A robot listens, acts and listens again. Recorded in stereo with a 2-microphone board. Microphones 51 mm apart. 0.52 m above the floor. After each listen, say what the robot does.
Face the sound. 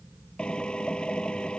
Turn 20° left.
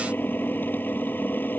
Turn 140° left.
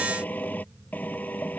Turn 35° left.
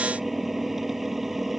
Facing the drill.